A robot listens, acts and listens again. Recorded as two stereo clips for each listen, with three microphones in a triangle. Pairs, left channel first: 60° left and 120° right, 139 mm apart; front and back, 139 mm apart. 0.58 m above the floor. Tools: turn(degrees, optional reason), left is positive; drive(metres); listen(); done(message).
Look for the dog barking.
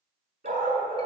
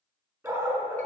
turn(degrees=-105, reason="The dog barking: 105° right.")
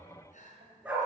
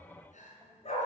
turn(degrees=-40, reason="The dog barking is now 40° right.")
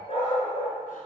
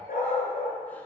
turn(degrees=10, reason="The dog barking is now 10° left.")
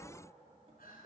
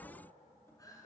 listen()
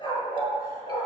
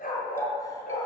done("Found it: a dog barking, straight ahead.")